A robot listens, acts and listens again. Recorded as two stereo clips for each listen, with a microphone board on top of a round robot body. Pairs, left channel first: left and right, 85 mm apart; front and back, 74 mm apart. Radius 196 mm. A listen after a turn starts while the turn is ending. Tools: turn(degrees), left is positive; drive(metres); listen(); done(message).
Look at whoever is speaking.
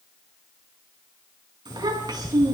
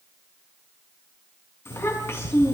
turn(degrees=-50)
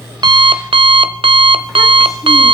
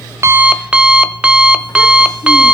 listen()
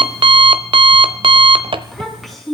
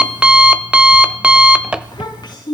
done("Found it: a child speaking, straight ahead, over 4 m away.")